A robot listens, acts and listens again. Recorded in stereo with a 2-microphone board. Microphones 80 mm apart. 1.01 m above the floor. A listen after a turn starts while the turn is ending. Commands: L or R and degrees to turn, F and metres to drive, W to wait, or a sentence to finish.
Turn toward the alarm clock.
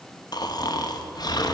W
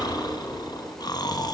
W
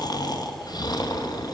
I can't make out an alarm clock, only snoring.